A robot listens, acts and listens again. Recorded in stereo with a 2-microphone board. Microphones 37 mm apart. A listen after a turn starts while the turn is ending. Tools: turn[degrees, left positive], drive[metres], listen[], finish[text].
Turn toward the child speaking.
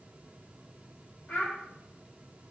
Thought: The child speaking: about 60° left or 120° left.
Action: turn[60]
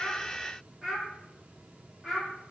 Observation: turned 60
Action: finish[Found it: a child speaking, straight ahead, 2 to 4 m away.]